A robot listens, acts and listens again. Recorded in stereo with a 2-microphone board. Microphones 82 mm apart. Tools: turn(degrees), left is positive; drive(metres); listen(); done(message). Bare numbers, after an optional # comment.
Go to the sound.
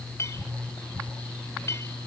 # The clink: about 40° left or 140° left.
turn(40)
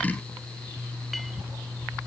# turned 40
listen()
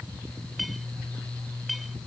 drive(1.0)
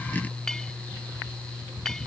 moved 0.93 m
# The clink is now 10° left.
turn(10)
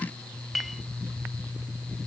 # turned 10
drive(1.0)
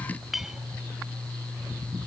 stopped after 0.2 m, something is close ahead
done("Arrived at the clink, straight ahead.")